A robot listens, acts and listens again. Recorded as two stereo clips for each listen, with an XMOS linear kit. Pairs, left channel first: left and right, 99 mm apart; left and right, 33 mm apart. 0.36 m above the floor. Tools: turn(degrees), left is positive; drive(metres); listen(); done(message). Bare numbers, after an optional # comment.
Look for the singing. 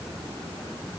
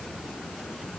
listen()
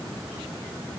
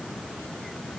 listen()
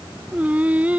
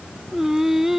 turn(-30)
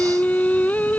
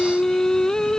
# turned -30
# So it is at 15° left.
turn(15)
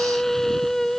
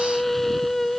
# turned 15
done("Facing the singing.")